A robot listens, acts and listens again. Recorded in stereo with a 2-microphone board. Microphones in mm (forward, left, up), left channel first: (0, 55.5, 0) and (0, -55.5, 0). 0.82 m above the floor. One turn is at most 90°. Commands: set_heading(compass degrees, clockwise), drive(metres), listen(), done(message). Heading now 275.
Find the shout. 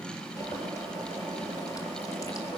listen()
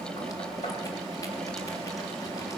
listen()
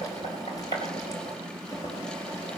done("I can't make out a shout, only boiling.")